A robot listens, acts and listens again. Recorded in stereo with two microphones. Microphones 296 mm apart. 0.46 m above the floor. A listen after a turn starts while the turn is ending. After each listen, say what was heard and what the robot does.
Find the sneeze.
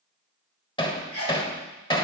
The sneeze: about 75° right or 105° right. Turn 75° right.
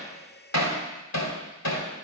Keep listening.
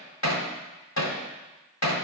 I heard a sneeze, but can't make it out now. It was about straight ahead or 30° right.